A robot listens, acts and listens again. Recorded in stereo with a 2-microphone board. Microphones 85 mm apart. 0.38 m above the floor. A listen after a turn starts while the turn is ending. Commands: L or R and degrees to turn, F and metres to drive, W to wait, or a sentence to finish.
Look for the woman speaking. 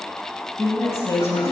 L30
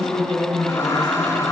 L125
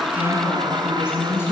L30
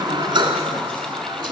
W
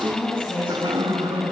L25
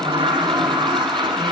W
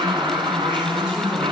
R15
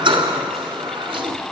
W
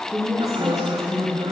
Facing the woman speaking, over 4 m away.